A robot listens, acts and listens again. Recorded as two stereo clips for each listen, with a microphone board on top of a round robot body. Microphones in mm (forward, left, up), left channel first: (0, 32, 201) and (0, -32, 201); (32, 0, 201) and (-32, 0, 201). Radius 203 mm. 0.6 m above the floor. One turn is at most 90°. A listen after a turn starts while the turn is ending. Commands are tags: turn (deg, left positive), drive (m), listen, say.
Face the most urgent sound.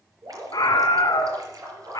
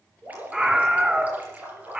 <turn deg="90"/>
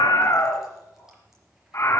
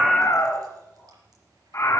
<turn deg="50"/>
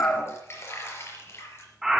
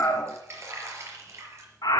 <say>Found it: a scream, straight ahead.</say>